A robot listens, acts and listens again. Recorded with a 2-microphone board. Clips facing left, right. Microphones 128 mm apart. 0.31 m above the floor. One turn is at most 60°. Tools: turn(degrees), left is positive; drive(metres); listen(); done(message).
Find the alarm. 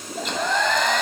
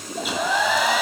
listen()
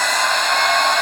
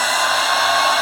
listen()
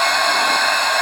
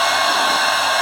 done("I can't make out an alarm, only a hair dryer.")